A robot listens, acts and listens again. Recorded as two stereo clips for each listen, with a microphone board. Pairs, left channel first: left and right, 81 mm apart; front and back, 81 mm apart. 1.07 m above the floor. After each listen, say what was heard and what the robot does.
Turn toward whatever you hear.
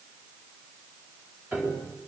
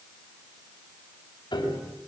The piano: 20° right. Turn 20° right.
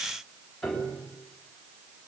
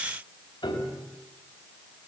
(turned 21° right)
Found it: a piano, straight ahead.